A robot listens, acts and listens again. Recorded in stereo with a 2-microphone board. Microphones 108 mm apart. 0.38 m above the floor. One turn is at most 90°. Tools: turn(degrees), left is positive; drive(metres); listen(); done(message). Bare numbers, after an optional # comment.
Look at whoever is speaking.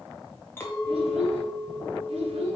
# The child speaking: about 65° right or 115° right.
turn(-65)
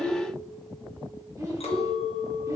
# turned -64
# So it is at 35° right.
turn(-35)
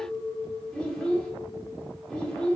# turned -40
done("Found it: a child speaking, straight ahead.")